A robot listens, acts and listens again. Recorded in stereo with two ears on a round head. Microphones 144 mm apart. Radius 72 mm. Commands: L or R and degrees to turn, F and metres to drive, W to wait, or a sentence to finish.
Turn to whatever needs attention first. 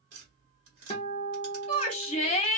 L35
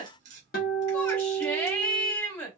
L10
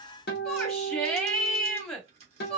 Found it: a shout, straight ahead.